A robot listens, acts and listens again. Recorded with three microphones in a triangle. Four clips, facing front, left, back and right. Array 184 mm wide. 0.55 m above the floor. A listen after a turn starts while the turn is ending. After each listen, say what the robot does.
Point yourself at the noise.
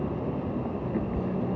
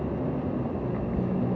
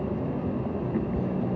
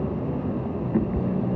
Turn 90° right.
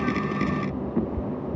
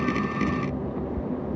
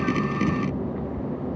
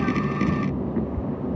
Turn 15° right.
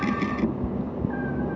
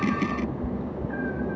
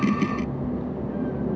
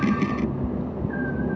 Facing the cat meowing.